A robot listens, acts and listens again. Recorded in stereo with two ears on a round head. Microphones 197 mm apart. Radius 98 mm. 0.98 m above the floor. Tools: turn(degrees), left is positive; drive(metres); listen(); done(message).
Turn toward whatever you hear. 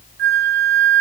turn(degrees=-50)
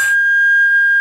done("Facing the flute.")